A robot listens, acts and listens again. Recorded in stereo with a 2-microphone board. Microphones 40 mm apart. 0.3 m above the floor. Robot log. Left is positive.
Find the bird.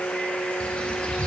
note: The bird: about 35° left or 145° left.
cmd yaw +35
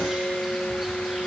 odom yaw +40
cmd idle
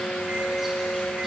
cmd idle
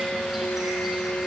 end: I heard a bird, but can't make it out now. It was about 5° right or 105° left.